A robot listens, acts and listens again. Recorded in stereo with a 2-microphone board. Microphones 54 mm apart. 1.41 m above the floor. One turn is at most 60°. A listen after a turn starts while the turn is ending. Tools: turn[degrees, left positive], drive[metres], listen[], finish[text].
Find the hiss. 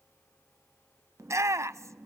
Action: listen[]
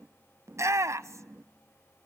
Action: listen[]
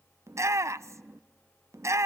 Action: finish[I can't make out a hiss to turn to.]